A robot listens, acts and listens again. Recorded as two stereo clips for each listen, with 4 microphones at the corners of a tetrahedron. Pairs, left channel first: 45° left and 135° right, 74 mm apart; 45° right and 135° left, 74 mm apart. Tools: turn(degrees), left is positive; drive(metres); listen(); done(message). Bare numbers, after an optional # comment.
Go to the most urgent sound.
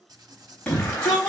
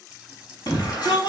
# The shout: 35° right.
turn(-35)
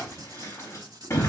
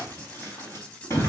drive(1.0)
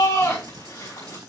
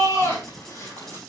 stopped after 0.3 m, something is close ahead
done("Something is in my way. I am facing the shout but have not reached it.")